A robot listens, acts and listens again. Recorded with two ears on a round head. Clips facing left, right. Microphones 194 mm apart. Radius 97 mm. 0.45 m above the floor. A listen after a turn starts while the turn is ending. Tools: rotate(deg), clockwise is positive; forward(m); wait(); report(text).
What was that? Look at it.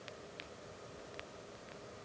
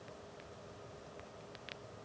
wait()
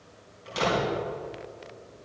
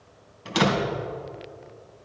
rotate(90)
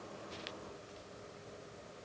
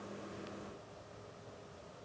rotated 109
rotate(-20)
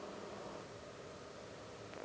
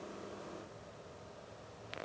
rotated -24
report("Facing where the door slam came from. I can't hear it now.")